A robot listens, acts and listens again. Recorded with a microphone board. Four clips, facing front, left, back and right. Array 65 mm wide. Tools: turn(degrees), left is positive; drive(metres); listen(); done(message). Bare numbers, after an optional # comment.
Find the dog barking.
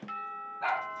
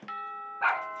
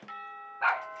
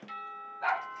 # The dog barking: 125° left.
turn(125)
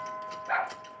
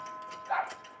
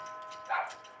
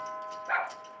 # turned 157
# The dog barking is now 55° right.
turn(-55)
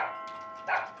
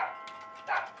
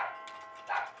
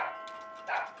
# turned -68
done("Facing the dog barking, over 4 m away.")